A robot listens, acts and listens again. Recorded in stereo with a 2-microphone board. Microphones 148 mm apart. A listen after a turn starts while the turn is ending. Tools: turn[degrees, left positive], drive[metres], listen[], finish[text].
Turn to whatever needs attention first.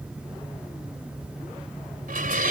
Action: listen[]
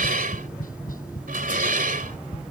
Action: listen[]
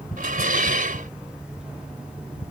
Action: finish[I can't make out anything urgent to turn to.]